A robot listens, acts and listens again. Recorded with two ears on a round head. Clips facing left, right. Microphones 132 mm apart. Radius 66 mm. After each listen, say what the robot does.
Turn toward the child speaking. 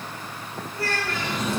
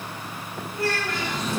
Turn 20° right.
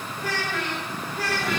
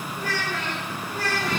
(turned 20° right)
Turn 35° right.
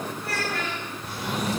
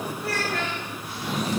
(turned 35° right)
Turn 115° right.
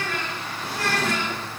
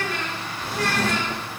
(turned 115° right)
Facing the child speaking.